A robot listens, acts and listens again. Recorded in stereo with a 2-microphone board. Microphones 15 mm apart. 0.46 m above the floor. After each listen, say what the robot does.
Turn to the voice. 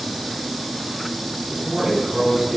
Turn 35° right.
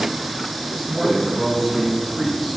Turn 10° right.
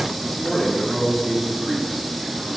Facing the man speaking.